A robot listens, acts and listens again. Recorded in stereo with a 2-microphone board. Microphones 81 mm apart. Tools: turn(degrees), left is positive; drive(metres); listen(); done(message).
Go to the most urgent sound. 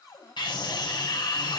turn(degrees=65)
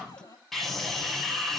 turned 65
drive(metres=1.0)
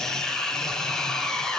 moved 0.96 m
drive(metres=1.0)
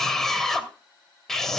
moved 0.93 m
drive(metres=1.0)
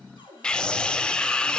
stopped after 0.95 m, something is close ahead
turn(degrees=15)
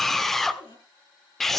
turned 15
done("I am next to the scream.")